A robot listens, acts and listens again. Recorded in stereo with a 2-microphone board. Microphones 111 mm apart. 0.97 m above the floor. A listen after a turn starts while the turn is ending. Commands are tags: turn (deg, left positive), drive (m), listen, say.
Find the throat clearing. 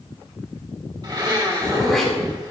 <turn deg="30"/>
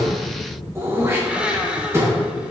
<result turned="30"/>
<turn deg="-25"/>
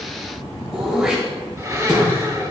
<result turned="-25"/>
<say>Found it: throat clearing, straight ahead.</say>